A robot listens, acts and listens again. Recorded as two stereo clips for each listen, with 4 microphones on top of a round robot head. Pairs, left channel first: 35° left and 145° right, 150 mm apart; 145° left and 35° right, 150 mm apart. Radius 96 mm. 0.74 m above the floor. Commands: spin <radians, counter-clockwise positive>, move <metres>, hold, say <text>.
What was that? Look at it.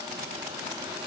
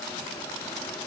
hold
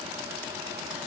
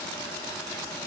hold
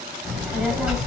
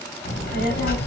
spin 2.18
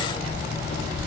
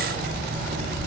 say Found it: a child speaking, straight ahead.